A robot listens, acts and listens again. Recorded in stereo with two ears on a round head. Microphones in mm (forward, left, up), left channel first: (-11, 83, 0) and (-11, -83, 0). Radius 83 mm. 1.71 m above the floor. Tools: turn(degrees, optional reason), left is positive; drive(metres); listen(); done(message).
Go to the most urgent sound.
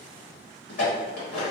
listen()
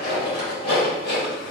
listen()
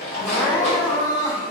turn(degrees=20, reason="The crying: about 20° left or 160° left.")
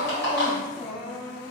turn(degrees=135, reason="So it is at 135° left.")
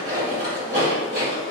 listen()
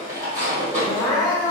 drive(metres=1.0)
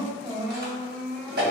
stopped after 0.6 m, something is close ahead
done("I am next to the crying.")